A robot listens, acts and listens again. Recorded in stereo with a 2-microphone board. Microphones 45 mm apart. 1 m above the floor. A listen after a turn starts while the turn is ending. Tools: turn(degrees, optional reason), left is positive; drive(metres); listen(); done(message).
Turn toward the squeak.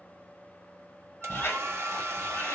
turn(degrees=65, reason="The squeak: about 65° left or 115° left.")
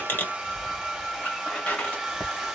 turn(degrees=40, reason="So it is at 40° left.")
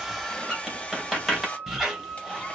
done("Facing the squeak.")